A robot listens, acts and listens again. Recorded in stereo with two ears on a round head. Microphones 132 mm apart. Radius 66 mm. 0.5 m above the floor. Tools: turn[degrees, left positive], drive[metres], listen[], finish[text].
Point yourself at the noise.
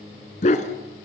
Thought: The dog barking: about 50° left or 130° left.
Action: turn[50]
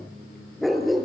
Action: finish[Facing the dog barking.]